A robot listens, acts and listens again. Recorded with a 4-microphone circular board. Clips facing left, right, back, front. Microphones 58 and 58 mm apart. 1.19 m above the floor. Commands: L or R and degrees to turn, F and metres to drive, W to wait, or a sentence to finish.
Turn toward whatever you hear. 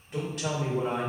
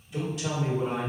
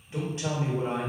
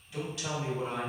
L120
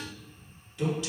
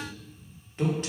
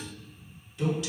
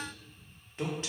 R45
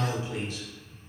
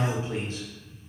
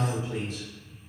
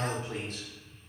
R35
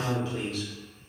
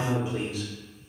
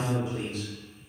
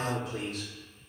R15
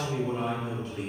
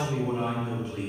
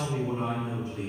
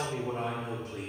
Facing the woman speaking, 1 to 2 m away.